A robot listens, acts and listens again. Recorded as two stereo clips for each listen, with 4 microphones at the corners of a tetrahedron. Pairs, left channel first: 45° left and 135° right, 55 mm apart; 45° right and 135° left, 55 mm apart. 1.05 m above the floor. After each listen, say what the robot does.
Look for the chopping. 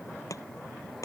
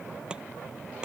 Turn 60° left.
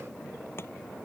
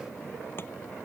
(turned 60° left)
Keep listening.
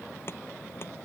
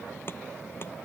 Facing the chopping.